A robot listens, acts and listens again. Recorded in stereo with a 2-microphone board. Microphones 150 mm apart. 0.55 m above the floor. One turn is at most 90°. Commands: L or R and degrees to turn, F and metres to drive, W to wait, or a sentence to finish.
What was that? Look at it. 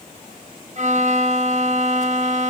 R55
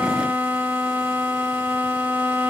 R10
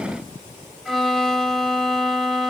Found it: a violin, straight ahead, under 1 m away.